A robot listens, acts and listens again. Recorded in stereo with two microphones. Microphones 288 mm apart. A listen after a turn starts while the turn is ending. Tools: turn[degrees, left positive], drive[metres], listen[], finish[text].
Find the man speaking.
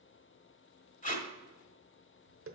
Action: listen[]
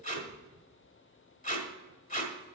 Action: listen[]
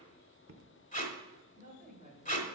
Thought: The man speaking: about 25° right or 155° right.
Action: turn[-25]
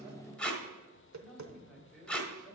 Action: listen[]
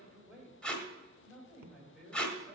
Action: finish[Found it: a man speaking, straight ahead, 2 to 4 m away.]